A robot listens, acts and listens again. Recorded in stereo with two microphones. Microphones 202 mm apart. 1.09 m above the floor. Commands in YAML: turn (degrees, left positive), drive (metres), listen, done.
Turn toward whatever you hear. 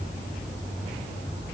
listen: true
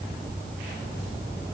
listen: true
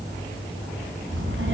turn: -75
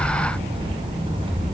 turn: -25
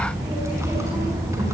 turn: -15
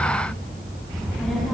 done: "Facing the child speaking."